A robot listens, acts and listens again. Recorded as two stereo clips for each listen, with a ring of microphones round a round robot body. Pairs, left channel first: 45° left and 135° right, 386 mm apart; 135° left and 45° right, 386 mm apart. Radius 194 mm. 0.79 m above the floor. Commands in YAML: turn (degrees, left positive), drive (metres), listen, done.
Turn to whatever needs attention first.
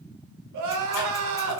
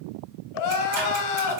turn: 180
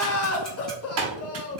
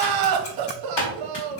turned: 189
turn: -10
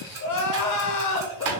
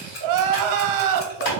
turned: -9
done: "Facing the crying."